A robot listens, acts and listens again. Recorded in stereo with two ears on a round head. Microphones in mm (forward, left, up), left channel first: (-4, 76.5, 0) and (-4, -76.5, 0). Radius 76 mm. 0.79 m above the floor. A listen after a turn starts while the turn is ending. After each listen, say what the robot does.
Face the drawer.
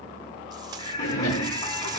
Turn 90° left.
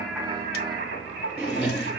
Turn 10° right.
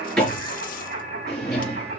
Facing the drawer, over 4 m away.